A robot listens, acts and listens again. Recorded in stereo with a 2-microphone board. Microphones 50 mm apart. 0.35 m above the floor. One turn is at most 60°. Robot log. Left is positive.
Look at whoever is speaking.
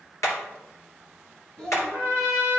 note: The child speaking: about 20° left or 160° left.
cmd yaw +20
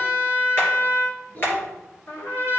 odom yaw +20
note: So it is at 135° left.
cmd yaw +60
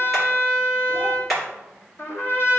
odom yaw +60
note: Nothing new. It was at 75° left.
cmd yaw +60
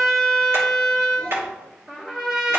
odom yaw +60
note: Nothing new. It was at 15° left.
cmd yaw +15
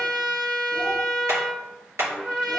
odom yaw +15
end: Facing where the child speaking came from. I can't hear it now.